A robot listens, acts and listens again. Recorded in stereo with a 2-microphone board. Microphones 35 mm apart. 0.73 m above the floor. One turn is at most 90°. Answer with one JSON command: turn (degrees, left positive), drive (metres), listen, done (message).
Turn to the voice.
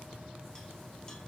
{"listen": true}
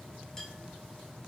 {"listen": true}
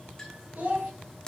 {"turn": -55}
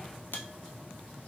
{"listen": true}
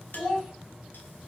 {"done": "Found it: a child speaking, straight ahead."}